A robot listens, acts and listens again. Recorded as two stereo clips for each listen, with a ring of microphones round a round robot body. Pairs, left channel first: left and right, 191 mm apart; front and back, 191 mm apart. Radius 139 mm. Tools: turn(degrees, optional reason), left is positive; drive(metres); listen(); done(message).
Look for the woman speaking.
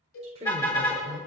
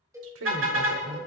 turn(degrees=-165, reason="The woman speaking: 165° right.")
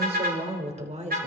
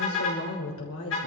turn(degrees=-35, reason="The woman speaking is now 35° right.")
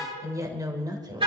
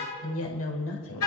turn(degrees=-20, reason="The woman speaking is now 20° right.")
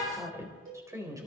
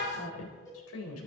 turn(degrees=-15, reason="The woman speaking is now 15° right.")
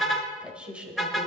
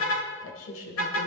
done("Facing the woman speaking, over 4 m away.")